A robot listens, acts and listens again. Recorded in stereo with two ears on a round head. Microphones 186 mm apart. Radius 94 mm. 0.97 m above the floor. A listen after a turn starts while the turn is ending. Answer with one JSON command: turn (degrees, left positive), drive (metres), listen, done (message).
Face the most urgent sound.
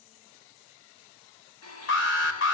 {"turn": 60}
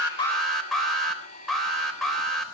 {"done": "Found it: an alarm, straight ahead."}